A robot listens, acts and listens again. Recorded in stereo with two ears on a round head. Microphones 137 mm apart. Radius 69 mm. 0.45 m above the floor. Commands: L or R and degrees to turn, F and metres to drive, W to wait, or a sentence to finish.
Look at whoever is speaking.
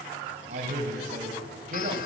R50
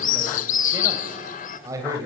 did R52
R25
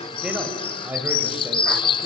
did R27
R20
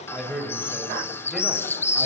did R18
Found it: a man speaking, straight ahead, 2 to 4 m away.